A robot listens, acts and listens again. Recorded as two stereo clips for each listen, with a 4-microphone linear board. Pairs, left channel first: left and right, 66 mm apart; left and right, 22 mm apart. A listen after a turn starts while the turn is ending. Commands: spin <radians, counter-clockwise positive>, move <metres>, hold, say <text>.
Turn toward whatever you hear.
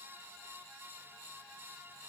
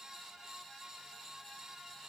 hold
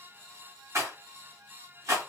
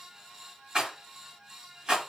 spin -0.79
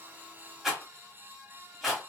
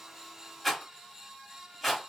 say Facing the rattle.